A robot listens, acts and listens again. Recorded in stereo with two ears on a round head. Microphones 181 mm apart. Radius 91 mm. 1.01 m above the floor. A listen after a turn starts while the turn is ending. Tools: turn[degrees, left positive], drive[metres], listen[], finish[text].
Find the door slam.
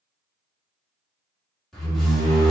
Action: turn[30]
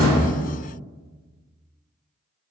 Action: listen[]
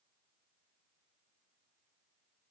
Action: finish[I heard a door slam, but can't make it out now. It was about 30° right or 150° left.]